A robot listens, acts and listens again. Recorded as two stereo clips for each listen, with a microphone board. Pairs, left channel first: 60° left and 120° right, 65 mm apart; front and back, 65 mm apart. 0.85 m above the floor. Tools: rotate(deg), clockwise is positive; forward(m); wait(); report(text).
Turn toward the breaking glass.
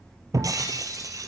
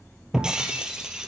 rotate(105)
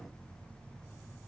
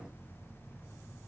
report("I heard breaking glass from this way, but can't make it out now.")